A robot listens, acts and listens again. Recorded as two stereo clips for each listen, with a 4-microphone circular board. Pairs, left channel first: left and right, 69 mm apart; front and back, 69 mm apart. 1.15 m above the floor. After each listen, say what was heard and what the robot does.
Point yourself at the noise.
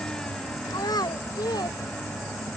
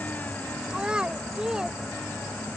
The child speaking: 100° left. Turn 100° left.
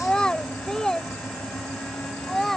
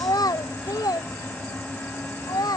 Facing the child speaking.